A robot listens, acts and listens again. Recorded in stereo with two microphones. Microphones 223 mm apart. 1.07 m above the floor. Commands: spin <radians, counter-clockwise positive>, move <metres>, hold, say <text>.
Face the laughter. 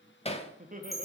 spin -0.70
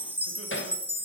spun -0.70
hold
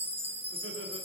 hold
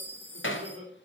spin -1.75
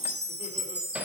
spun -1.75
hold
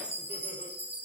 hold
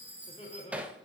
spin 0.44
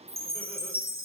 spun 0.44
hold
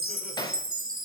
hold
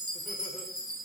say I heard laughter from this way, but can't make it out now.